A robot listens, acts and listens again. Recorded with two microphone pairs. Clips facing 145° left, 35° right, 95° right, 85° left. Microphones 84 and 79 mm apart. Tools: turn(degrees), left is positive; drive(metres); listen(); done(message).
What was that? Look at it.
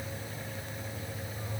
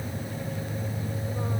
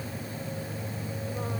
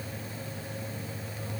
listen()
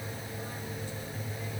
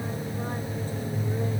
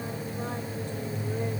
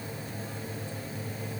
listen()
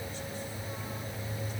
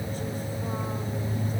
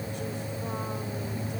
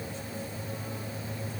done("I can't make out anything.")